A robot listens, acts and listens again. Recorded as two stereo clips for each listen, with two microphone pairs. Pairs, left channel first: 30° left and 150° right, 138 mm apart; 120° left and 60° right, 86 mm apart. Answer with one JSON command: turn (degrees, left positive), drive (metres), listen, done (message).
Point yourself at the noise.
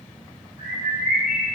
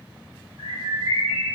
{"turn": -75}
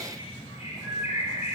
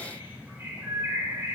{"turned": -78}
{"done": "Found it: a bird, straight ahead, 1 to 2 m away."}